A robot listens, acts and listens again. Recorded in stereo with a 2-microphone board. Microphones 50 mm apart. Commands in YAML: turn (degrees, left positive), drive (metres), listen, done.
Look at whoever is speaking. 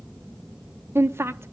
turn: -55
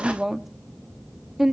turn: -10
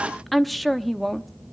done: "Facing the woman speaking."